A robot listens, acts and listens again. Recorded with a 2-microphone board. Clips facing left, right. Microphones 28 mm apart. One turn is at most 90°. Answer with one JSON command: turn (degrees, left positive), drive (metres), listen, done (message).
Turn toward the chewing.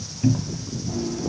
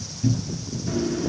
{"turn": -90}
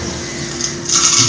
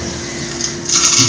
{"turn": 10}
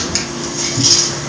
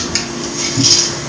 {"done": "Found it: chewing, straight ahead, 2 to 4 m away."}